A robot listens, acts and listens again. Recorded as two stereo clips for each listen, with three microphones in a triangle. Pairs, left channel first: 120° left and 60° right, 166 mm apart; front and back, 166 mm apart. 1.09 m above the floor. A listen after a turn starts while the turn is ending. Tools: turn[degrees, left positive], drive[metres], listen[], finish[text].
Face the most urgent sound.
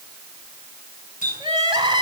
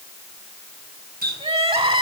Thought: The crying: 125° right.
Action: turn[-125]
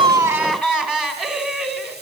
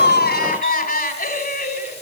Thought: The crying is now 25° left.
Action: turn[25]
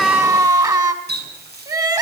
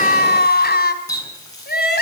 Thought: The crying is now 10° left.
Action: turn[10]
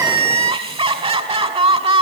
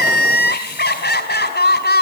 Action: finish[Found it: crying, straight ahead.]